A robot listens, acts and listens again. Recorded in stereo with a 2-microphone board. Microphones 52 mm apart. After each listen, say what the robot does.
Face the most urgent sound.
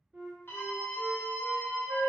Turn 40° left.
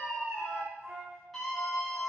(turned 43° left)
Facing the scream, under 1 m away.